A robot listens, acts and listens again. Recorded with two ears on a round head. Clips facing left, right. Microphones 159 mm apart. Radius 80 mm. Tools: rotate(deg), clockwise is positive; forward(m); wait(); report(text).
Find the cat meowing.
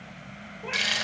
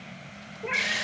rotate(20)
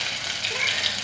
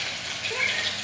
wait()
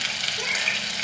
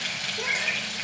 wait()
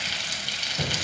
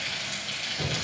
report("I heard a cat meowing, but can't make it out now. It was about straight ahead or 140° right.")